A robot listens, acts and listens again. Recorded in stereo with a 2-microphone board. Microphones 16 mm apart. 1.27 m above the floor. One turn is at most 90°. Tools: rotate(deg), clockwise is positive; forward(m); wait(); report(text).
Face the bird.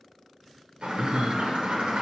rotate(70)
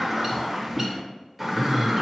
rotate(10)
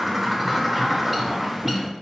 report("Facing the bird, under 1 m away.")